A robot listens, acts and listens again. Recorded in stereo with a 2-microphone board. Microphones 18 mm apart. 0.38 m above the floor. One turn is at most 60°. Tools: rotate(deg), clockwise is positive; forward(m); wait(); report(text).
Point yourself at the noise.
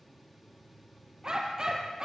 rotate(45)
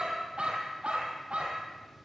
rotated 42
rotate(60)
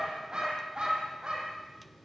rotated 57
rotate(45)
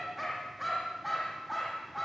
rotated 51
report("Found it: a dog barking, straight ahead.")